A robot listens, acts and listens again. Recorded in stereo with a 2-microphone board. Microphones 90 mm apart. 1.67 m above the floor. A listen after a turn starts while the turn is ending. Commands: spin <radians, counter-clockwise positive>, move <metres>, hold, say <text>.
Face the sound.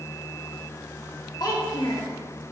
spin 0.87
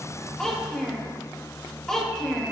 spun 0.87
say Found it: a child speaking, straight ahead, 1 to 2 m away.